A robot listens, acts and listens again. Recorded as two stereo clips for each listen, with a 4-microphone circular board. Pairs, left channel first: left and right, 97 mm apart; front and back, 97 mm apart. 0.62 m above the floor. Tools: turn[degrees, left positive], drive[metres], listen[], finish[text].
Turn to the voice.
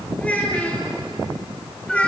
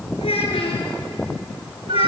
Thought: The child speaking: 15° left.
Action: turn[15]
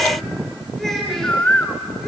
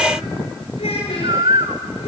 Action: finish[Facing the child speaking.]